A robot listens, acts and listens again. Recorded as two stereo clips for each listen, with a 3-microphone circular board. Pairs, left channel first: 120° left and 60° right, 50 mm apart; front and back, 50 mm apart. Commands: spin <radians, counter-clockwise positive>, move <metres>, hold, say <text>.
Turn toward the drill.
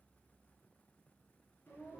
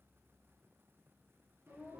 hold
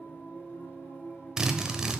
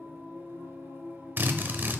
spin -2.36
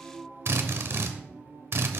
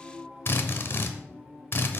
spin -0.61
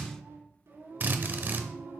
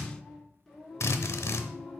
spin -0.26
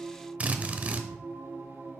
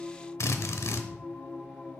say Facing the drill.